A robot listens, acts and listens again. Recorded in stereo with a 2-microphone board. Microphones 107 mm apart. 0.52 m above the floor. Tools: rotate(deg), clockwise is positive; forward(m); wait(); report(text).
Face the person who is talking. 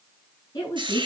rotate(-35)
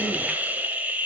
wait()
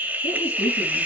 wait()
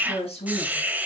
rotate(-110)
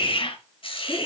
wait()
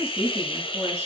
rotate(25)
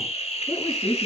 rotate(10)
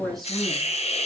report("Facing the woman speaking, over 4 m away.")